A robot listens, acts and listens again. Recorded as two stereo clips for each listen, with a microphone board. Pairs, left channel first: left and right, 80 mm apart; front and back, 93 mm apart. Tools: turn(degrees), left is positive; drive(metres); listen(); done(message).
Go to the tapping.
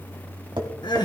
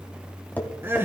turn(degrees=-70)
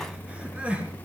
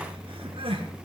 listen()
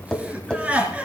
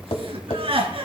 turn(degrees=10)
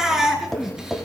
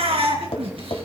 drive(metres=1.0)
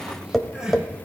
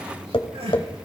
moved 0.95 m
drive(metres=1.0)
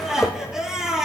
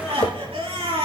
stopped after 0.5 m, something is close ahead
listen()
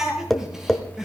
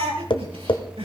done("I am next to the tapping.")